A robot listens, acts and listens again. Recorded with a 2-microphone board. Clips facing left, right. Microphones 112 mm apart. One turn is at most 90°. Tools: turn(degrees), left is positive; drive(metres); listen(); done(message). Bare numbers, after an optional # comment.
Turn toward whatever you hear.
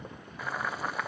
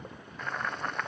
turn(30)
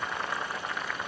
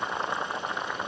# So it is at 25° right.
turn(-25)
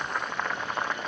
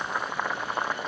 # The boiling is now 10° right.
turn(-10)
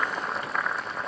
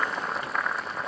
done("Found it: boiling, straight ahead.")